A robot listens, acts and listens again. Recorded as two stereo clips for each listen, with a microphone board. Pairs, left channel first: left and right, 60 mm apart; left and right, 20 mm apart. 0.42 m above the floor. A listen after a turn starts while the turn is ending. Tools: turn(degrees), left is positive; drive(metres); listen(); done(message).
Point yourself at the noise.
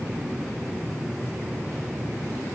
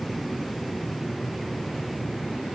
listen()
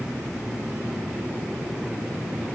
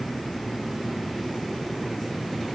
listen()
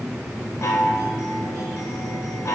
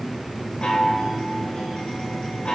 turn(degrees=55)
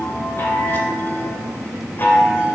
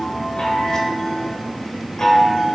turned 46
turn(degrees=50)
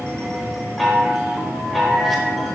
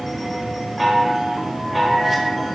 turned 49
done("Facing the chime, 1 to 2 m away.")